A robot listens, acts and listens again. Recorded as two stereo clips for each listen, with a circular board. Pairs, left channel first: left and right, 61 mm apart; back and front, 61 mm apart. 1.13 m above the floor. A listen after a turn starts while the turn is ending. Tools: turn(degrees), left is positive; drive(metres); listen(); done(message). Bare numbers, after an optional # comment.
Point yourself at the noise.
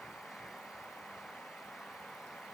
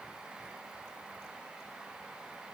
listen()
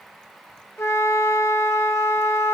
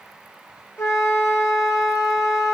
# The flute: 135° left.
turn(135)
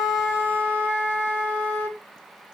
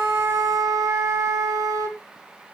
# The flute is now 25° left.
turn(25)
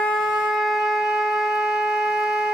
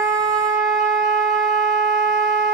done("Found it: a flute, straight ahead, under 1 m away.")